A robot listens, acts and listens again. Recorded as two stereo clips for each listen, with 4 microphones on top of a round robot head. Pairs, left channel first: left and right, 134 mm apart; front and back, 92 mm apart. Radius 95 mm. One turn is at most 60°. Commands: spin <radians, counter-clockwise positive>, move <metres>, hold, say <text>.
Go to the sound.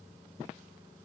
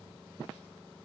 hold
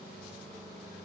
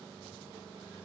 hold
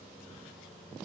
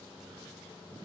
say I can't make out anything to turn to.